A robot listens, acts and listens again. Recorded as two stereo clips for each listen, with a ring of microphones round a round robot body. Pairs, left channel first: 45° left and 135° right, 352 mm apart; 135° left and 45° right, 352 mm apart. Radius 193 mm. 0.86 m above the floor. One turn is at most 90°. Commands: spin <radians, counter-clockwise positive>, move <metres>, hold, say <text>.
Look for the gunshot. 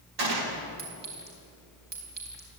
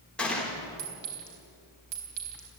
spin -1.57
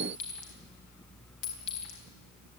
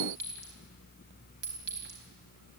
spin -0.87
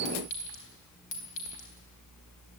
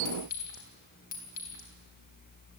say I heard a gunshot from this way, but can't make it out now.